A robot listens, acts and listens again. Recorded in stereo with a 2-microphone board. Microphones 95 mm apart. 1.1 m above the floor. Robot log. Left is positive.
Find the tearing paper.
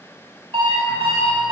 cmd idle
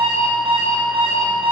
cmd idle
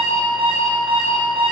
end: I can't make out tearing paper, only an alarm clock.